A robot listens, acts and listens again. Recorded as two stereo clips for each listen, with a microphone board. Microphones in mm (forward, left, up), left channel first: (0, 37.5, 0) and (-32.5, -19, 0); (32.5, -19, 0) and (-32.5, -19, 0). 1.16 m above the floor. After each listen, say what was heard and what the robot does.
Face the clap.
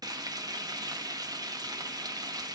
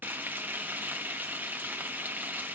Keep listening.
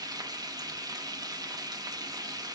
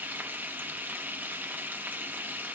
Keep listening.
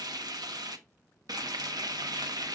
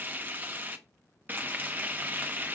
I can't make out a clap to turn to.